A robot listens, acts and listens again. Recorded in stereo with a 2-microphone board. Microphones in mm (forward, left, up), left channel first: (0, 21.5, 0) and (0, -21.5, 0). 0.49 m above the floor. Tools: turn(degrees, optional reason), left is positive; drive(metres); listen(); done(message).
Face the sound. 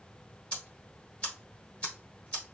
turn(degrees=25, reason="The ticking: about 25° left or 155° left.")
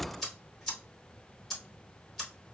done("Found it: ticking, straight ahead.")